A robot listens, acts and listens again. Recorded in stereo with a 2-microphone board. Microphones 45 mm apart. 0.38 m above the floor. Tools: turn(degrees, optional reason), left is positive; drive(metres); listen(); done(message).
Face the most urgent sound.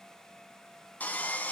listen()
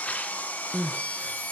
turn(degrees=-20, reason="The crying: about 20° right or 160° right.")
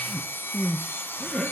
done("Facing the crying, 1 to 2 m away.")